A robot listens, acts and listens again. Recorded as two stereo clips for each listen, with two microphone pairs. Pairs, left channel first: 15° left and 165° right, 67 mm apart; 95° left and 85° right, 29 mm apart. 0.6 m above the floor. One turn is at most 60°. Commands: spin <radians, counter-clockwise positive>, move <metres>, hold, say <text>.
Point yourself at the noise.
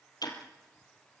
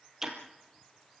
spin -0.17
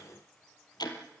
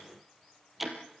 say Found it: ticking, straight ahead, 2 to 4 m away.